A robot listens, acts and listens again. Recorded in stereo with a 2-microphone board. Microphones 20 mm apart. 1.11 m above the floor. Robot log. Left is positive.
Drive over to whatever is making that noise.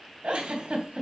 note: The giggle: about 70° right or 110° right.
cmd yaw -70
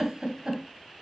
note: So it is at 25° right.
cmd yaw -25
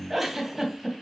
cmd fwd 1.0
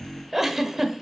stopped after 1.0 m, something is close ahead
note: The giggle is now 15° right.
cmd yaw -15
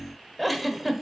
end: I am next to the giggle.